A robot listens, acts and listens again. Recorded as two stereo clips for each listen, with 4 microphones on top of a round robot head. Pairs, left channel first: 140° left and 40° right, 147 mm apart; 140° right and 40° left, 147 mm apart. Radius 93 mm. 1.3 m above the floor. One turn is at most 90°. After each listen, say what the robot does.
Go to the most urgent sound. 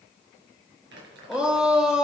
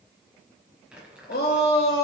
Turn 90° right.
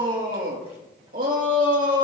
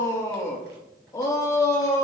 Turn 70° right.
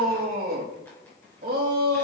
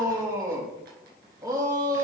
Turn 25° right.
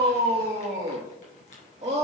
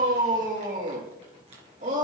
Drive 1.0 m forward.
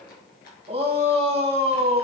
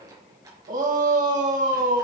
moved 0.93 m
Turn 10° left.
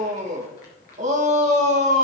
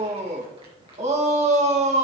Drive 1.0 m forward.
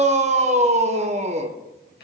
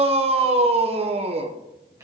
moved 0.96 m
Drive 1.0 m forward.
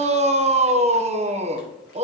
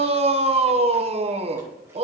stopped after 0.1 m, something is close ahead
I am next to the shout.